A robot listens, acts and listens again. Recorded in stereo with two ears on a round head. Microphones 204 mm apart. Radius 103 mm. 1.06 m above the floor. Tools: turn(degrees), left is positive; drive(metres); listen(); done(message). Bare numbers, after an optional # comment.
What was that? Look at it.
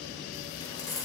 # The keys jangling: about 15° left or 165° left.
turn(15)
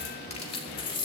# The keys jangling: about 25° left or 155° left.
turn(25)
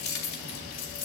# So it is at 140° left.
turn(140)
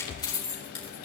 # The keys jangling is now 25° left.
turn(25)
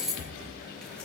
done("Found it: keys jangling, straight ahead, 2 to 4 m away.")